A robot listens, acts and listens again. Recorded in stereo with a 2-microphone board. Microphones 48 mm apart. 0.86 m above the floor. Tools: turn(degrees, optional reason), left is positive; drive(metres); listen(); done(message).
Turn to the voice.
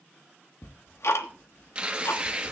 listen()
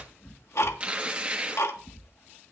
listen()
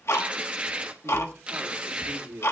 turn(degrees=-90)
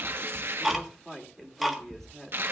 turn(degrees=10, reason="So it is at 10° left.")
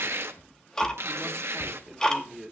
done("Facing the man speaking.")